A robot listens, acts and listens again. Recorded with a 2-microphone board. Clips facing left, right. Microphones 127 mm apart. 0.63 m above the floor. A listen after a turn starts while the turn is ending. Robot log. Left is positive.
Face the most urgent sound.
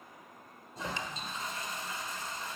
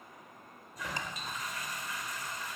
cmd idle
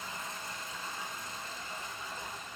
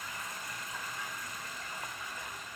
cmd idle
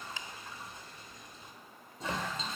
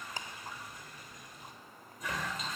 end: I can't make out anything urgent, only a toilet flushing.